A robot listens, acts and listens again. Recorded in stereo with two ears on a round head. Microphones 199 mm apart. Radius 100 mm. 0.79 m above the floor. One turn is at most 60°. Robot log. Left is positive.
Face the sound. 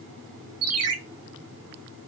cmd yaw -60
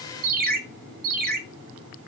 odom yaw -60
note: So it is at 40° right.
cmd yaw -40
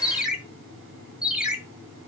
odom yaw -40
end: Facing the ringtone, 1 to 2 m away.